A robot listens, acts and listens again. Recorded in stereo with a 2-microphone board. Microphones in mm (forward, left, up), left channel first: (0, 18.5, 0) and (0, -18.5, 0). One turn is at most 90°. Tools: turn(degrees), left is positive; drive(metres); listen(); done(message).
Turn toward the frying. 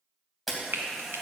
turn(degrees=-90)
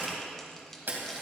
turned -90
listen()
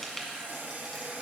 done("Found it: frying, straight ahead, 1 to 2 m away.")